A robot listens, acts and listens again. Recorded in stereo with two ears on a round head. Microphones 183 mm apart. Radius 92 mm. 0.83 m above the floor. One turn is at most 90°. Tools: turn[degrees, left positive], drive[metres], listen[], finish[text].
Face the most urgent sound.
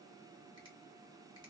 Action: listen[]
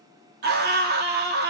Thought: The scream: about 50° right or 130° right.
Action: turn[-50]
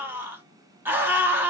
Thought: So it is at 10° right.
Action: turn[-10]
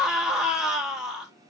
Action: finish[Facing the scream.]